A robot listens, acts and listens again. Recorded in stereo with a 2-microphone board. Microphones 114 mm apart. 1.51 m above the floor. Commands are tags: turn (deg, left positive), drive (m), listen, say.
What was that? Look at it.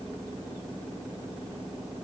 <listen/>
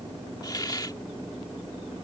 <turn deg="35"/>
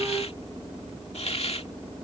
<turn deg="105"/>
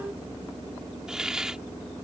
<say>Found it: a hiss, straight ahead.</say>